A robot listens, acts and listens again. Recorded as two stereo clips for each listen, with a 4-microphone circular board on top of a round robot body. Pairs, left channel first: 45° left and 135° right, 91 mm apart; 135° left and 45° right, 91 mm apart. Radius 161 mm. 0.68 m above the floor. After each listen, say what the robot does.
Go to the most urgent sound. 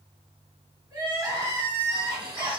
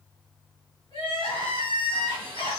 Turn 170° left.
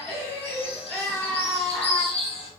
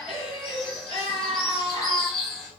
Turn 40° right.
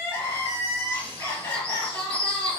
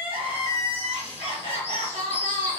Turn 20° right.
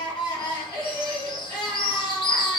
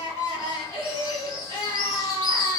Drive 1.0 m forward.
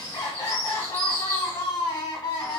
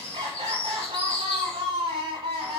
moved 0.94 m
Turn 10° right.
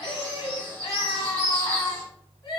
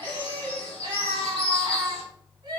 Drive 1.0 m forward.
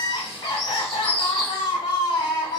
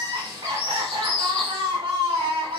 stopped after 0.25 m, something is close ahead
Arrived at the crying, straight ahead.